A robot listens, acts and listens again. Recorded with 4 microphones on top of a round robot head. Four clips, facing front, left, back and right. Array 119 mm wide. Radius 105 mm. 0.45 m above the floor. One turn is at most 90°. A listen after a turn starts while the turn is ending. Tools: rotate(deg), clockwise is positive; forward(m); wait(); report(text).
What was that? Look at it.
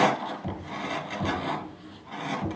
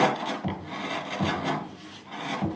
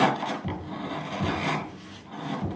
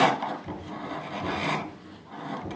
rotate(-70)
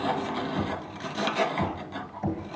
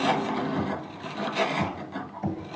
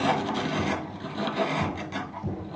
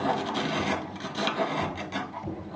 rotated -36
rotate(-35)
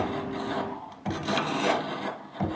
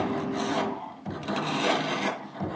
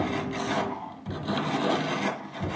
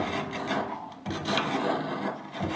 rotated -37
report("Found it: knocking, straight ahead.")